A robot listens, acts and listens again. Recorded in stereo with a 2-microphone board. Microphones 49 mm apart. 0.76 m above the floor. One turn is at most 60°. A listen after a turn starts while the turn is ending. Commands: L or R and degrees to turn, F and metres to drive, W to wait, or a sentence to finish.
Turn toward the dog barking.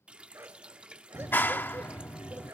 R60
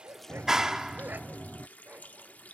R35
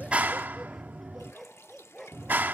Facing the dog barking.